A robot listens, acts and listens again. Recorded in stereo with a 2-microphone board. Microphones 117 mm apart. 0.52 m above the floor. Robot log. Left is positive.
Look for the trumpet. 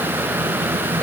cmd idle
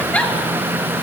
cmd idle
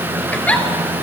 end: I can't make out a trumpet to turn to.